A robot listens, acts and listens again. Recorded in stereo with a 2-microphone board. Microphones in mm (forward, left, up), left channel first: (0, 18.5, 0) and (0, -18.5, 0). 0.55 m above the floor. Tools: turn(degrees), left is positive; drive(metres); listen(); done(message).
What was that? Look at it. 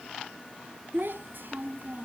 turn(degrees=-60)
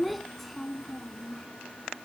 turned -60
turn(degrees=15)
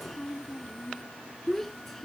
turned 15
turn(degrees=10)
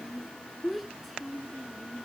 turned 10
done("Found it: a child speaking, straight ahead.")